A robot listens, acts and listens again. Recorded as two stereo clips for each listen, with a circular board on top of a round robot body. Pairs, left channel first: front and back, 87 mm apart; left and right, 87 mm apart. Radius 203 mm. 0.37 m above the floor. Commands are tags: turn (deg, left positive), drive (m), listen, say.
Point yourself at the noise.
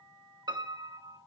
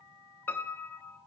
<turn deg="150"/>
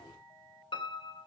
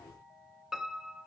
<say>Facing the piano.</say>